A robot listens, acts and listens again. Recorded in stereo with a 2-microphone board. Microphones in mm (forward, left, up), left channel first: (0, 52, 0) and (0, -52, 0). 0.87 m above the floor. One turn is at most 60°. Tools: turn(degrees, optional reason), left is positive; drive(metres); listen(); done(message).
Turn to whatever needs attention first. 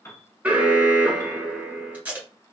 turn(degrees=-30)
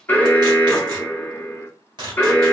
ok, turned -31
turn(degrees=20, reason="So it is at 20° left.")
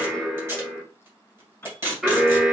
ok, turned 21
done("Facing the alarm.")